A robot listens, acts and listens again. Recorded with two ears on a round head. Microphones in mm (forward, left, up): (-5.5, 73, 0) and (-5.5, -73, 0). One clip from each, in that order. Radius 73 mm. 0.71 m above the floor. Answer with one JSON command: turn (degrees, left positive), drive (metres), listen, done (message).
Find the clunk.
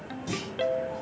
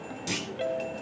{"turn": -55}
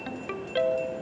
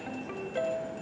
{"listen": true}
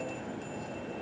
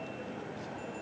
{"done": "I heard a clunk, but can't make it out now. It was about straight ahead or 70° right."}